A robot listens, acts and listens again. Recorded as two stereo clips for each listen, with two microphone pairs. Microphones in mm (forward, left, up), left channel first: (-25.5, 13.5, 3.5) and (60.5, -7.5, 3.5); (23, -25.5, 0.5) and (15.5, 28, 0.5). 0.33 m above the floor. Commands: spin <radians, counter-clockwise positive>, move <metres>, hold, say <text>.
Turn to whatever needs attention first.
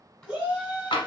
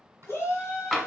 spin -1.57
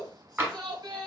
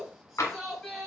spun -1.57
say Found it: a shout, straight ahead.